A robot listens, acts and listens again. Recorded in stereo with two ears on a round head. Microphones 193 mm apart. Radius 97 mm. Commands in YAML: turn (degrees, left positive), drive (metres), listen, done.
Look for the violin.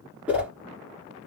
listen: true
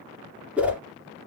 listen: true
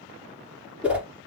done: "I can't make out a violin to turn to."